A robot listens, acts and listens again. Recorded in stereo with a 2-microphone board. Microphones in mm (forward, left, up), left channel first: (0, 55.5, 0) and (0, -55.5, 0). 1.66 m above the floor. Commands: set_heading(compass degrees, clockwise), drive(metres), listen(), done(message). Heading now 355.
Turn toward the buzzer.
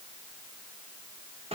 listen()
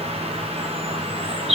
listen()
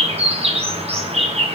done("I can't make out a buzzer to turn to.")